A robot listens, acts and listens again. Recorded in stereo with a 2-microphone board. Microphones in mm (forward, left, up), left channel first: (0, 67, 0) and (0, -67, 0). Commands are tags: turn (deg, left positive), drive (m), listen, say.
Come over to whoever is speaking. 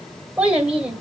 <turn deg="-30"/>
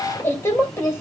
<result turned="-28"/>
<turn deg="20"/>
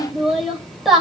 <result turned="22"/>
<drive m="1.0"/>
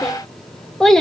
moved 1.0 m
<drive m="1.0"/>
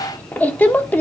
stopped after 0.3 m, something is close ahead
<turn deg="15"/>
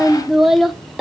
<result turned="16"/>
<say>I am next to the child speaking.</say>